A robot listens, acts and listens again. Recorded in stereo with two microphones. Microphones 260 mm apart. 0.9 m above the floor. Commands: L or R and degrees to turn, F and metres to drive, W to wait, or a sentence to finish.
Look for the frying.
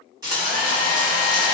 R30
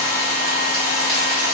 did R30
W
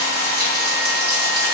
R135
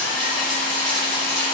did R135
Found it: frying, straight ahead.